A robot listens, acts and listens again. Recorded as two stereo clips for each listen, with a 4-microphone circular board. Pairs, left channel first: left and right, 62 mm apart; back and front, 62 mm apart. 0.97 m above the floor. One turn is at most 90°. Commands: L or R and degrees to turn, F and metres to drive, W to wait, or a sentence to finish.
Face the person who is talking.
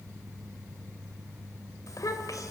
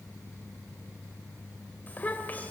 L90
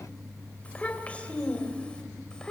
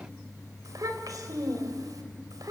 L15
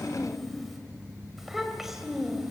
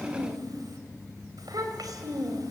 Found it: a child speaking, straight ahead, 2 to 4 m away.